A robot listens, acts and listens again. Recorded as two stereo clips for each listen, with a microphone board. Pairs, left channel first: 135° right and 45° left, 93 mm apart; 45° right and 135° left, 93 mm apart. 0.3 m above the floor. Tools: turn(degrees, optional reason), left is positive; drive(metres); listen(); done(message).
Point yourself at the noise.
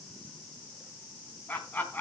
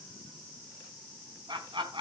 turn(degrees=155, reason="The laughter: 155° left.")
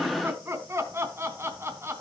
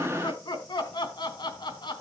turn(degrees=-15, reason="The laughter is now 15° right.")
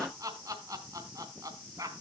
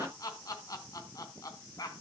done("Found it: laughter, straight ahead.")